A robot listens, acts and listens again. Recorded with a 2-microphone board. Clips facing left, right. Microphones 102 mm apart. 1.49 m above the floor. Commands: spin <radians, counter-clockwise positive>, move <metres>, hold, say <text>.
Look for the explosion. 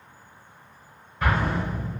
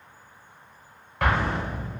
spin -1.57
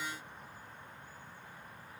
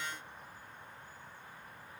say Facing where the explosion came from. I can't hear it now.